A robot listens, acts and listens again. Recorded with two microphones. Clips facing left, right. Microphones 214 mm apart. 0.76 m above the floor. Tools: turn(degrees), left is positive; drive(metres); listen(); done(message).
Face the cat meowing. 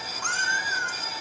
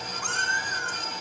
turn(degrees=40)
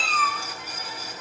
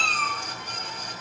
done("Found it: a cat meowing, straight ahead, 2 to 4 m away.")